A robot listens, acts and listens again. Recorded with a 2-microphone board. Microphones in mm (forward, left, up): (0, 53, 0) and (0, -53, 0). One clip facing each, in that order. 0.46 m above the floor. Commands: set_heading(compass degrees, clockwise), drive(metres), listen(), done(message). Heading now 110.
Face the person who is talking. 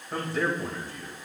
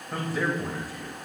set_heading(125)
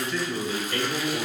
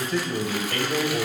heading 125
set_heading(250)
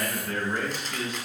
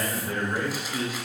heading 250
done("Facing the man speaking, 2 to 4 m away.")